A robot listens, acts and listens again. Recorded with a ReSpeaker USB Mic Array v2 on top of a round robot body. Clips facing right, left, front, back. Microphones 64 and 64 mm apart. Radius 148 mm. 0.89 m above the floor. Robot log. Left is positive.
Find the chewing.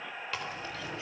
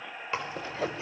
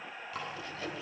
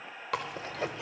note: The chewing: 155° left.
cmd yaw +155
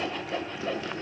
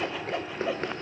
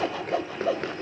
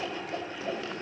note: The chewing is now 45° left.
cmd yaw +45
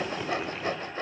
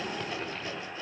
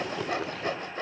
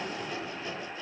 end: Facing the chewing, 2 to 4 m away.